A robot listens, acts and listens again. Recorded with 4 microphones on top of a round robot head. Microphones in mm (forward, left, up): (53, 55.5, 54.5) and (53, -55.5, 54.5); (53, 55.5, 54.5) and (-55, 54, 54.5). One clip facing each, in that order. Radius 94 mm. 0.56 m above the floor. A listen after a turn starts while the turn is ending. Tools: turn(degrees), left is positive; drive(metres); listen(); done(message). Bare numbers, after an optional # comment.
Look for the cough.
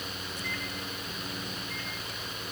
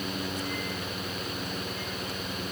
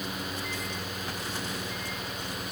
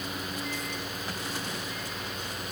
listen()
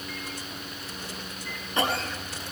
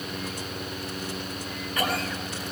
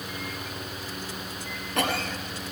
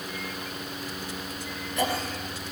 # The cough: 25° left.
turn(25)
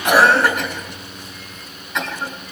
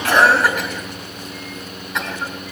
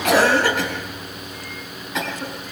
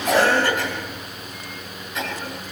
done("Found it: a cough, straight ahead, over 4 m away.")